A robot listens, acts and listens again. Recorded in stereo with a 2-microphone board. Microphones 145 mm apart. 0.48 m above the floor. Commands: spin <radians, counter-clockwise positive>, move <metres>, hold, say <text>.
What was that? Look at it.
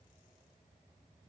hold
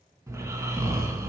spin -0.35
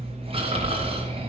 spin -2.44
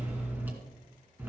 spin -0.26
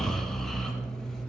say Facing the snoring.